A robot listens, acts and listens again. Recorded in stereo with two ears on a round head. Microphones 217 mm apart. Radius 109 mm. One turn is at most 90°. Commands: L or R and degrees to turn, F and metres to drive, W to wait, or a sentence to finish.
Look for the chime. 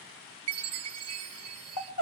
R65
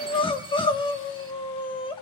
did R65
W
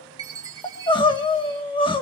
R20
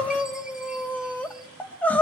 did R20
W
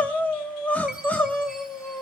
W
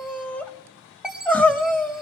Facing the chime.